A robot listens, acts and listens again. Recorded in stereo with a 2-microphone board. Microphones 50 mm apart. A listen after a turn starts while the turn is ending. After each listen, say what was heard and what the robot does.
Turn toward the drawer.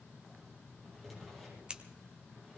Turn 30° left.
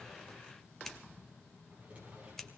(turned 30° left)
So it is at 25° right. Turn 25° right.
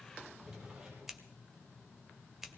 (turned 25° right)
The drawer is now 15° right. Turn 15° right.
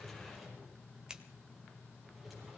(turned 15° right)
Found it: a drawer, straight ahead, over 4 m away.